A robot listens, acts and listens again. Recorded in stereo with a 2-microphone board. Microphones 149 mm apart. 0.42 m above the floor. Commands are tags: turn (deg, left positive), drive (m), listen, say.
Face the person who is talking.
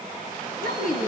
<turn deg="65"/>
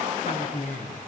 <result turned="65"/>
<turn deg="50"/>
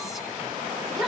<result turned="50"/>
<say>Found it: a woman speaking, straight ahead, over 4 m away.</say>